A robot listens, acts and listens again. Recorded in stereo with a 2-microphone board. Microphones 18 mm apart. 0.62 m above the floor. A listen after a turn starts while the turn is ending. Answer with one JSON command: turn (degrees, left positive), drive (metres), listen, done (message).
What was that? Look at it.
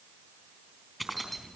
{"turn": 30}
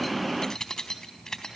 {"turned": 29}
{"turn": 140}
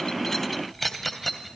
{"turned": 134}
{"done": "Facing the keys jangling."}